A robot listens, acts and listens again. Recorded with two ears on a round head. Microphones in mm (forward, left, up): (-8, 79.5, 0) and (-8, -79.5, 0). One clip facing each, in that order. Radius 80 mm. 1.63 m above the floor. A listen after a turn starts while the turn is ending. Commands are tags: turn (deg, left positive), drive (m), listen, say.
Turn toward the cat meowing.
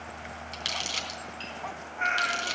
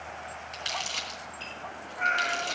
<turn deg="60"/>
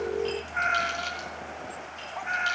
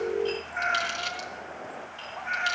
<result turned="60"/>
<turn deg="35"/>
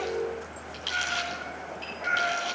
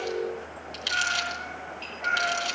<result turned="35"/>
<turn deg="10"/>
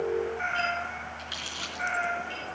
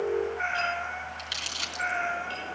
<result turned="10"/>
<say>Facing the cat meowing, over 4 m away.</say>